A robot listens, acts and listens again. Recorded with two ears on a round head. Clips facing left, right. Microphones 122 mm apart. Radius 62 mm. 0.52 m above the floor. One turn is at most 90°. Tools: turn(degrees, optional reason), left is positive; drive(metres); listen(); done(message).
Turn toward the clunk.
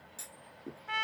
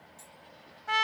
turn(degrees=90)
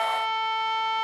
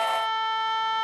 done("Facing where the clunk came from. I can't hear it now.")